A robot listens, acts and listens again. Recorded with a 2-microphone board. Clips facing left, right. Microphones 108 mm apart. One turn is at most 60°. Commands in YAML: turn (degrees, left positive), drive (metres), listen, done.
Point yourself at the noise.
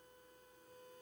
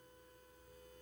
listen: true
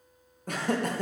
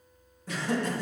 turn: 50
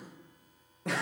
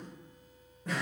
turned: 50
turn: 60
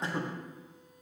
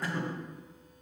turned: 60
turn: 25
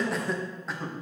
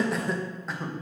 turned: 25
done: "Found it: laughter, straight ahead."